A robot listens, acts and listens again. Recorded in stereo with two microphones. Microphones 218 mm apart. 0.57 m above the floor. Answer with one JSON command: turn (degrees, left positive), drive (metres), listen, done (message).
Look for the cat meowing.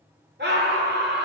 {"listen": true}
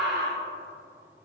{"listen": true}
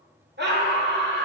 {"done": "I can't make out a cat meowing to turn to."}